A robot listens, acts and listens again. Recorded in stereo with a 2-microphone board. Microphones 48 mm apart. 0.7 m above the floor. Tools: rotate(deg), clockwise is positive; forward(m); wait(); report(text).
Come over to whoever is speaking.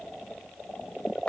wait()
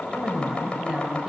rotate(15)
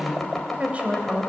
rotate(150)
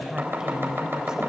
rotate(15)
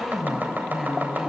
forward(1.0)
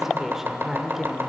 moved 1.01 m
rotate(10)
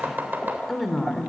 forward(1.0)
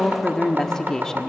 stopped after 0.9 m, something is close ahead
rotate(-15)
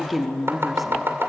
report("I am next to the woman speaking.")